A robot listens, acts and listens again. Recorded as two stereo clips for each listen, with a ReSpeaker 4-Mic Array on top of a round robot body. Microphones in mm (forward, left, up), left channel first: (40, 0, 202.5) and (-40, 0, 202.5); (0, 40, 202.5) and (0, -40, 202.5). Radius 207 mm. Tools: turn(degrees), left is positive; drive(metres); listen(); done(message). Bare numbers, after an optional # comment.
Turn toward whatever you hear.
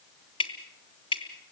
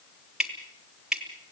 done("Facing the dripping, 1 to 2 m away.")